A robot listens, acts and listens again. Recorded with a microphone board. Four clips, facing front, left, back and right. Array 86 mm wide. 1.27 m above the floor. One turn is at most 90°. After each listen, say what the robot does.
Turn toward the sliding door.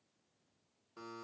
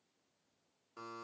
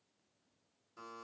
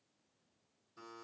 Keep listening.
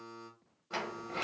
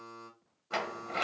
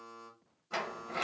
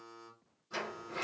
Turn 90° left.
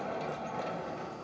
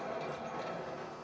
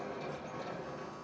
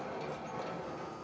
Facing the sliding door, 1 to 2 m away.